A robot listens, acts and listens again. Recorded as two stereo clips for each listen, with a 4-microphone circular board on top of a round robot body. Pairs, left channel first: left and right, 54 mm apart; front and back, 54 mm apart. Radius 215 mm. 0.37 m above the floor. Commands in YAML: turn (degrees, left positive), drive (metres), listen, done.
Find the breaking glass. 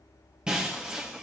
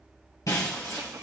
turn: -15
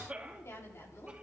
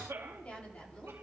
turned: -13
done: "Facing where the breaking glass came from. I can't hear it now."